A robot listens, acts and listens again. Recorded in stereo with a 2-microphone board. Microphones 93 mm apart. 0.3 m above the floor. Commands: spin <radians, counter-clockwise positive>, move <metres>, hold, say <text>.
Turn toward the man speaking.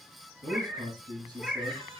spin -0.79
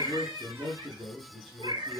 say Facing the man speaking.